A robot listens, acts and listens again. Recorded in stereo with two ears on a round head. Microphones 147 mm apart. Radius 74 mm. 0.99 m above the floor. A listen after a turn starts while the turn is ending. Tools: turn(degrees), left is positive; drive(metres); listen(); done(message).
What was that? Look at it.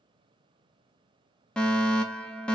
turn(degrees=30)
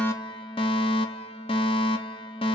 turn(degrees=145)
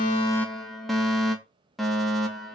done("Found it: a fire alarm, straight ahead, 2 to 4 m away.")